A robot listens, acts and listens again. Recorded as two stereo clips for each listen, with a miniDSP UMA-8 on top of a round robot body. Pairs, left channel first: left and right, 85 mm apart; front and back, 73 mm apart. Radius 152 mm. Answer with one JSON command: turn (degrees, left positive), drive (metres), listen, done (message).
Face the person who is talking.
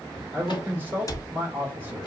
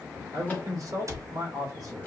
{"turn": -150}
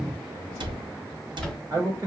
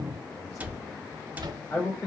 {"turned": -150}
{"turn": -40}
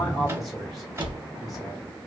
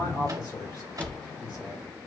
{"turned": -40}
{"done": "Found it: a man speaking, straight ahead, 2 to 4 m away."}